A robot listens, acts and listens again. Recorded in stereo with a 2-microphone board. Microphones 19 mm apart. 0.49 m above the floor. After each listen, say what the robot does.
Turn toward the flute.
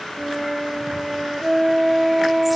Turn 20° right.
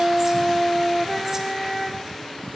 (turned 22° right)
Found it: a flute, straight ahead, 1 to 2 m away.